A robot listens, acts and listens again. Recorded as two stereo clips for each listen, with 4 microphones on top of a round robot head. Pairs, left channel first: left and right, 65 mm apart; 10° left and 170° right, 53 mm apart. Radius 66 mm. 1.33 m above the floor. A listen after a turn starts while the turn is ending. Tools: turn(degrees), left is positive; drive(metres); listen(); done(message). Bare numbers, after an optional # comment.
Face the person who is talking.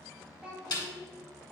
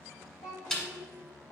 # The child speaking: 15° right.
turn(-15)
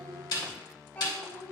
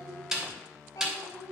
# The child speaking is now 30° left.
turn(30)
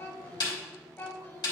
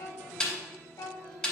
# The child speaking is now 35° left.
turn(35)
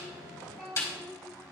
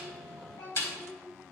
# The child speaking is now 15° left.
turn(15)
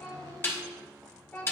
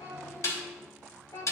# The child speaking is now 20° left.
turn(20)
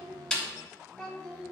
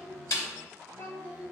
done("Found it: a child speaking, straight ahead, 1 to 2 m away.")